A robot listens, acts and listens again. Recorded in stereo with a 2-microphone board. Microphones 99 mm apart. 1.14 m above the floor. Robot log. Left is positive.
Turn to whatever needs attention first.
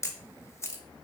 cmd idle
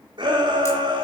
note: The shout: about 50° right or 130° right.
cmd yaw -50
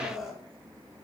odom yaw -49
end: Facing the shout, 2 to 4 m away.